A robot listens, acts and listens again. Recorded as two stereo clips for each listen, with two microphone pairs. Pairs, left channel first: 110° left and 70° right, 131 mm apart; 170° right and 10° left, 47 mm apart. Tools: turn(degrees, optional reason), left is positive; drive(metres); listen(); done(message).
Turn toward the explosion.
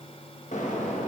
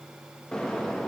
turn(degrees=120, reason="The explosion: 120° left.")
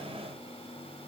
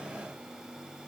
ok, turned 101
turn(degrees=15, reason="Nothing new. It was at 15° left.")
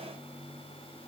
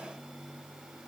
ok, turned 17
done("I heard an explosion from this way, but can't make it out now.")